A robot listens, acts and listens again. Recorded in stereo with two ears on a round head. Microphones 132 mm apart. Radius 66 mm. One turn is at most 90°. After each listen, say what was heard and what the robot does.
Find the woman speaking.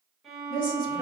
The woman speaking: about 30° left or 150° left. Turn 30° left.
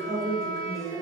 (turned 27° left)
Found it: a woman speaking, straight ahead.